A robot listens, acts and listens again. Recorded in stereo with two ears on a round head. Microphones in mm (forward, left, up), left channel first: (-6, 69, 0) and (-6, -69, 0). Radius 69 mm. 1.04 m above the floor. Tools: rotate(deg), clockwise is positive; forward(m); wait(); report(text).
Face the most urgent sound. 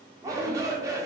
rotate(20)
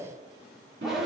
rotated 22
report("Facing the shout, 2 to 4 m away.")